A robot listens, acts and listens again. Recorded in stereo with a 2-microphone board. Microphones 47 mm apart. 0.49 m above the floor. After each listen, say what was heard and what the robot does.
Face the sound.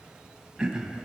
Turn 30° right.
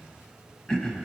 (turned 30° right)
So it is at 15° left. Turn 15° left.
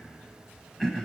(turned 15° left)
Facing the throat clearing, under 1 m away.